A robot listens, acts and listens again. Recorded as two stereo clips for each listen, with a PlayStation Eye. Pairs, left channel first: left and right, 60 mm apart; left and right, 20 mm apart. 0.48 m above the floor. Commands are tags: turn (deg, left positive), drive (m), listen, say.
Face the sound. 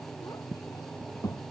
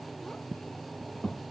<turn deg="90"/>
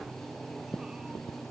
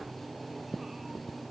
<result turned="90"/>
<listen/>
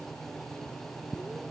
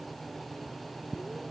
<listen/>
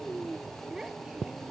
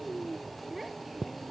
<turn deg="-10"/>
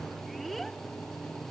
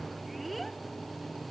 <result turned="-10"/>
<say>Facing the child speaking.</say>